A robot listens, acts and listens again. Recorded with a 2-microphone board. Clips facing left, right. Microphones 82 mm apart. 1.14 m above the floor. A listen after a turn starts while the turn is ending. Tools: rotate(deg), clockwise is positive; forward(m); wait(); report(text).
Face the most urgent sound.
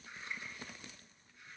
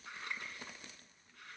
wait()
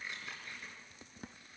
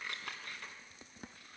wait()
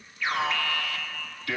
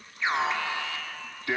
rotate(25)
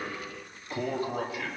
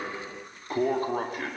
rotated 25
rotate(135)
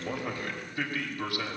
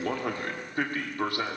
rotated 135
rotate(35)
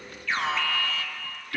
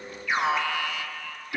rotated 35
rotate(15)
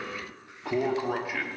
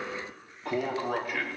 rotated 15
report("Facing the alarm, 2 to 4 m away.")